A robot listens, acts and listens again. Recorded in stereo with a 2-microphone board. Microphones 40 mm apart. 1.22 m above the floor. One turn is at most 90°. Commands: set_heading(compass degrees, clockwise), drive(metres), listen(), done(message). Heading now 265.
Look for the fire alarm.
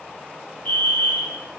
set_heading(220)
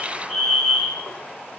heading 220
done("Found it: a fire alarm, straight ahead.")